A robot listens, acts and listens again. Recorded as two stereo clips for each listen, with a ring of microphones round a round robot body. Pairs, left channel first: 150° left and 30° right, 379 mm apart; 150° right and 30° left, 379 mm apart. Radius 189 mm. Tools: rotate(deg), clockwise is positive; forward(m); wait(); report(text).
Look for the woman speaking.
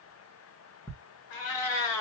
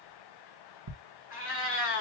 wait()
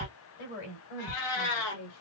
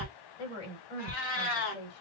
rotate(-175)
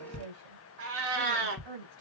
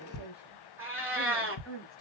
rotate(35)
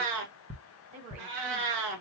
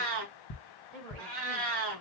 rotate(10)
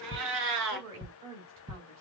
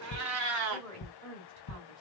report("Facing the woman speaking, over 4 m away.")